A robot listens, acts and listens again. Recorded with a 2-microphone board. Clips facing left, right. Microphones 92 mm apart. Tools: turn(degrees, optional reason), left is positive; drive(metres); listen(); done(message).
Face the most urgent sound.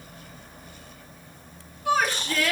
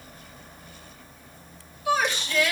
turn(degrees=45, reason="The shout: about 45° left or 135° left.")
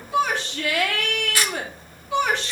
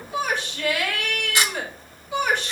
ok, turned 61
turn(degrees=75, reason="So it is at 75° left.")
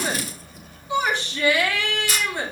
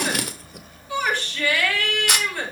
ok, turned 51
turn(degrees=20, reason="The shout is now 20° left.")
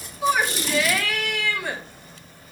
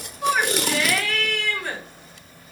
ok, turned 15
done("Facing the shout, 2 to 4 m away.")